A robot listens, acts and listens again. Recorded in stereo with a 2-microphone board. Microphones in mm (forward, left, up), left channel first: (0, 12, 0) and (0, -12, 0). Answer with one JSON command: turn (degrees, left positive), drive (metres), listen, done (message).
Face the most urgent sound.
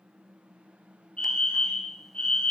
{"turn": 50}
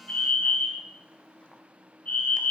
{"turn": 75}
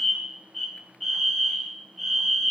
{"done": "Found it: a fire alarm, straight ahead, over 4 m away."}